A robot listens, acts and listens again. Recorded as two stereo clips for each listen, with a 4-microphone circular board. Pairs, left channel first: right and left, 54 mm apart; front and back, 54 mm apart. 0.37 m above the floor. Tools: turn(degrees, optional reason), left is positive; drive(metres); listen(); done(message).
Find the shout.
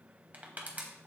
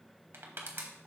listen()
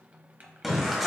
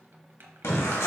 done("Facing the shout, 1 to 2 m away.")